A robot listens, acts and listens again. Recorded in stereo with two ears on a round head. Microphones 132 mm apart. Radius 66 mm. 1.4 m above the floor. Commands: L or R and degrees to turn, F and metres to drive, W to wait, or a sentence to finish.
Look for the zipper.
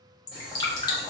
W
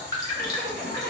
R55
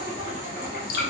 R70
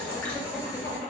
L20
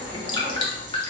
R10
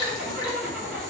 Found it: a zipper, straight ahead.